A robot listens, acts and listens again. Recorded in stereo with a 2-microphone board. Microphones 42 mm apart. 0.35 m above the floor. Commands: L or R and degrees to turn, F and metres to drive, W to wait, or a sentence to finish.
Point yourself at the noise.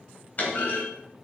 L40
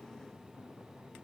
W
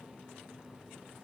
I heard a clunk, but can't make it out now. It was about straight ahead or 100° left.